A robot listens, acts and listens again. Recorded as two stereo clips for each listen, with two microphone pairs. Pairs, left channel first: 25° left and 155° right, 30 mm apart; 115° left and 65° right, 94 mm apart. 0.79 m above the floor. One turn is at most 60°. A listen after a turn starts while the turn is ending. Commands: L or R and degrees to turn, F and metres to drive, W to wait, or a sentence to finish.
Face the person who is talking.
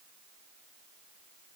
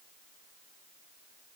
W
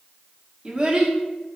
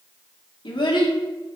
L60
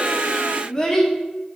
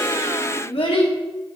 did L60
L60
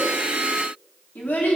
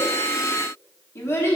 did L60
L45
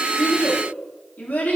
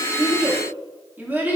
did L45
Facing the child speaking, 1 to 2 m away.